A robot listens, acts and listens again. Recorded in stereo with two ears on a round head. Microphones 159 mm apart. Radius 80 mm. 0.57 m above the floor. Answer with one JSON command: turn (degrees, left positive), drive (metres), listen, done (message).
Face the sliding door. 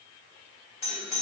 {"listen": true}
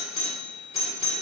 {"listen": true}
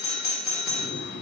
{"turn": 90}
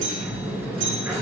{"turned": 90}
{"turn": -15}
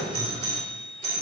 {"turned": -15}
{"done": "Facing the sliding door, 1 to 2 m away."}